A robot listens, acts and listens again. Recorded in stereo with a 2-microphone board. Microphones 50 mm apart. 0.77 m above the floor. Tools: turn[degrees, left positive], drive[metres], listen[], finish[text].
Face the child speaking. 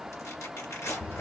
Action: listen[]
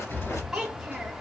Action: turn[30]
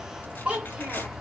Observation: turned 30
Thought: So it is at 20° right.
Action: turn[-20]
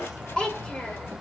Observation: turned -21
Thought: The child speaking is now 20° left.
Action: turn[20]
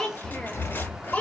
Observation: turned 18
Thought: The child speaking is now 30° left.
Action: turn[30]
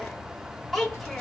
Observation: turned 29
Action: finish[Facing the child speaking.]